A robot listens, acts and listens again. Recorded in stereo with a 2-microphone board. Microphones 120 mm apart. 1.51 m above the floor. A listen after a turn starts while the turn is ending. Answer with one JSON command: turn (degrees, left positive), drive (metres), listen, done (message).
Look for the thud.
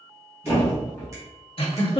{"turn": 20}
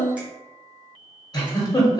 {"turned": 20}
{"listen": true}
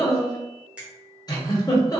{"done": "I heard a thud, but can't make it out now. It was about straight ahead or 140° left."}